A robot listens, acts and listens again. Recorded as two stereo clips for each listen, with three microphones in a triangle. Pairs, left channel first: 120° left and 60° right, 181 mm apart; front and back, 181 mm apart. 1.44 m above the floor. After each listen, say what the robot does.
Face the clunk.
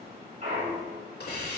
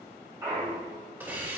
Turn 105° right.
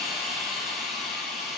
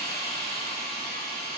Facing where the clunk came from. I can't hear it now.